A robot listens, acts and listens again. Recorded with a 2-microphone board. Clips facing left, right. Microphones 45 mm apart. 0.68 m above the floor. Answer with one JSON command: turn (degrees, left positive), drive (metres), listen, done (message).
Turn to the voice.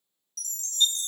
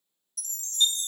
{"listen": true}
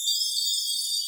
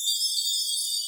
{"listen": true}
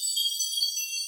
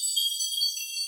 {"done": "I can't make out anyone speaking, only a chime."}